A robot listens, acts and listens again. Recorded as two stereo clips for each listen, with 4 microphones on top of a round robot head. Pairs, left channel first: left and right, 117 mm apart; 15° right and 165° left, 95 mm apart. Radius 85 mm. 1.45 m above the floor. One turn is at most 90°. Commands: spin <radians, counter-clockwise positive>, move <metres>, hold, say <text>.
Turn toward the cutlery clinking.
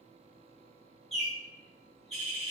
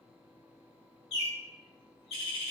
hold
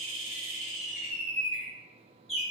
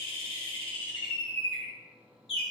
hold
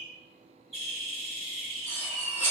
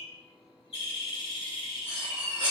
spin 1.57
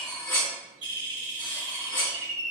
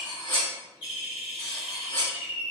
spin 0.87
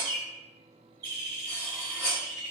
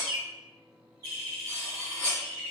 say Facing the cutlery clinking.